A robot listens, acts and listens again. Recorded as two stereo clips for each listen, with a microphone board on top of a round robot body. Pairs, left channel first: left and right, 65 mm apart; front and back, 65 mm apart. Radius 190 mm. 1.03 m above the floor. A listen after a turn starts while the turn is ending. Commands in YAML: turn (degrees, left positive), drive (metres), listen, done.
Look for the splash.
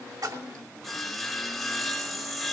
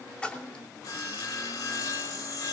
turn: -70
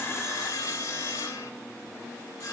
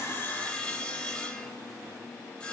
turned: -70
done: "I heard a splash from this way, but can't make it out now."